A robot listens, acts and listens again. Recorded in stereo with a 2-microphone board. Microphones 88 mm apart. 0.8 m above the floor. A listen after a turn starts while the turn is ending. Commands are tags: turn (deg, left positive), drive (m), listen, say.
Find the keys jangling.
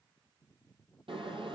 <listen/>
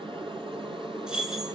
<turn deg="-30"/>
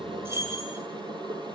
<turn deg="-145"/>
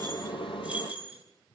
<turn deg="-15"/>
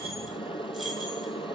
<listen/>
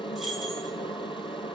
<listen/>
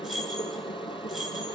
<say>Facing the keys jangling, over 4 m away.</say>